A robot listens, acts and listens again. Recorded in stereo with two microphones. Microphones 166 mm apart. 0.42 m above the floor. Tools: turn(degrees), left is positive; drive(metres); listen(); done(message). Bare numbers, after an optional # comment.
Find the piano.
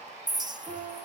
# The piano: about 35° right or 145° right.
turn(-35)
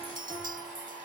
listen()
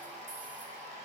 listen()
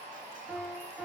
done("Facing the piano, over 4 m away.")